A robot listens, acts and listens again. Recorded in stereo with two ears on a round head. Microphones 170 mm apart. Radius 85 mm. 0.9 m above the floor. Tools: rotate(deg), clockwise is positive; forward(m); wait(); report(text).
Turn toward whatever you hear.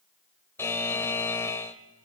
rotate(-30)
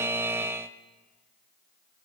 rotate(15)
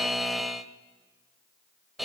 report("Found it: a buzzer, straight ahead, 1 to 2 m away.")